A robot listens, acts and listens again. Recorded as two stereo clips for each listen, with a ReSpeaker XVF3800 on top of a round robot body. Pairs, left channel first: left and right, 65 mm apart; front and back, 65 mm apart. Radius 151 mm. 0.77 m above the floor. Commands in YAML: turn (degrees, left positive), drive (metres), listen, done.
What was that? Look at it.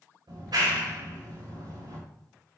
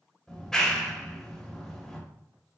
turn: -85
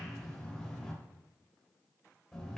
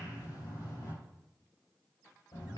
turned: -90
done: "Found it: a clap, straight ahead, 2 to 4 m away."